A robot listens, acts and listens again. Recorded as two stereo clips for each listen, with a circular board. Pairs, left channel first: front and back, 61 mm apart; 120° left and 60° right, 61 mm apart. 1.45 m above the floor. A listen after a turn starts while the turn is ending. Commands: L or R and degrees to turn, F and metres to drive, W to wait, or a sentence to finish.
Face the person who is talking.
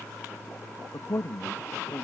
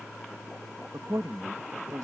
R50
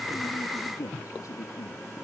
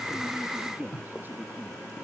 R10
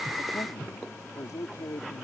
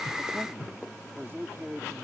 R10
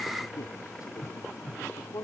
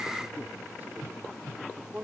Facing the man speaking.